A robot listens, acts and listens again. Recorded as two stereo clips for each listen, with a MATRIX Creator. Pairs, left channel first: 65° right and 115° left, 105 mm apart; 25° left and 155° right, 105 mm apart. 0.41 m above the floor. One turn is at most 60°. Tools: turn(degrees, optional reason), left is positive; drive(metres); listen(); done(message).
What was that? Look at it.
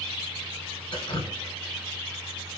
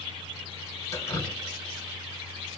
turn(degrees=-35, reason="The dripping: 35° right.")
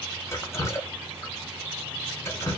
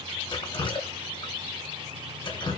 turn(degrees=-10, reason="The dripping is now 10° right.")
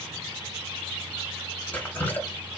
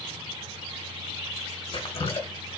done("Facing the dripping, 1 to 2 m away.")